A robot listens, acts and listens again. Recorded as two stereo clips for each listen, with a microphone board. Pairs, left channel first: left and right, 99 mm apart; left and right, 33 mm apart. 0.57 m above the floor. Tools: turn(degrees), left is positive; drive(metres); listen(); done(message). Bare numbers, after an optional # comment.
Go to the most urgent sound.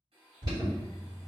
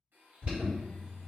# The alarm: about 45° right or 135° right.
turn(-45)
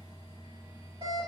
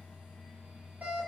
# So it is at 85° right.
turn(-85)
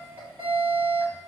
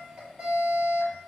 # The alarm is now 20° right.
turn(-20)
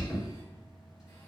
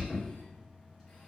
drive(1.0)
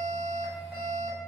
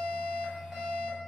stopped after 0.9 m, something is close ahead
# The alarm is now 10° right.
turn(-10)
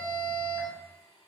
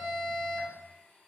done("Arrived at the alarm, straight ahead.")